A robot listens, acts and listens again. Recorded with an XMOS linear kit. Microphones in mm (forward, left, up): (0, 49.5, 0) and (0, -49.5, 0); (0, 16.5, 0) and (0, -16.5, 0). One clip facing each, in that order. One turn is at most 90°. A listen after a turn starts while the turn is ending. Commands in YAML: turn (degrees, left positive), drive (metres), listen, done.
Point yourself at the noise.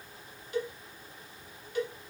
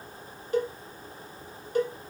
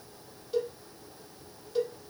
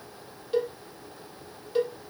turn: -40
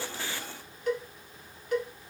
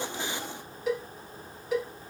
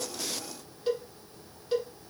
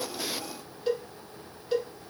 done: "Found it: a cowbell, straight ahead, 1 to 2 m away."